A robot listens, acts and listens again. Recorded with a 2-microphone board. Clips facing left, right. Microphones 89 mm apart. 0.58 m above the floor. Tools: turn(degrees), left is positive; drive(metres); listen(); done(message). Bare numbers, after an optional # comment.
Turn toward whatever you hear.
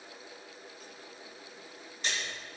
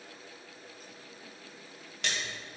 turn(-90)
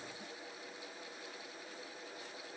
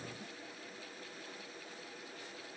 done("Facing where the splash came from. I can't hear it now.")